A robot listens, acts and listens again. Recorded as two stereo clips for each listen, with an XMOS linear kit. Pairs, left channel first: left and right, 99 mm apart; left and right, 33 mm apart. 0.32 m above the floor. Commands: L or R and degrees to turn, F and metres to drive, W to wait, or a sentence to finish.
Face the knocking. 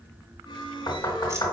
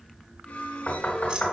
L50
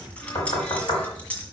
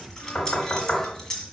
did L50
L75
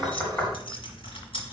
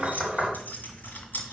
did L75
L10
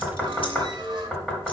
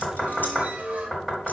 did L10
Facing the knocking.